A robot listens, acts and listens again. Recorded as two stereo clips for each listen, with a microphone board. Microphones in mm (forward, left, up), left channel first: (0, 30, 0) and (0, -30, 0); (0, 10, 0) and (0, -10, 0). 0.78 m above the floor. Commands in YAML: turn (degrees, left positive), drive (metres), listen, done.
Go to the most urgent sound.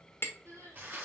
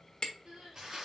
turn: -70
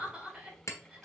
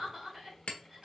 turn: -20
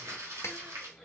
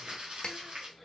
listen: true
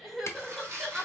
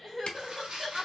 drive: 1.0
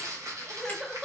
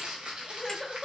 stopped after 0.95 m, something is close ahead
turn: -10
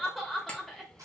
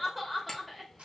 done: "Arrived at the crying, straight ahead."